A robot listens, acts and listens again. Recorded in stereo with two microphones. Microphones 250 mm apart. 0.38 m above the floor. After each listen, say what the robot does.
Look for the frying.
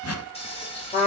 Turn 25° left.
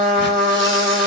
Keep listening.
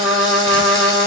Keep listening.
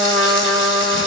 I heard frying, but can't make it out now. It was about straight ahead or 130° left.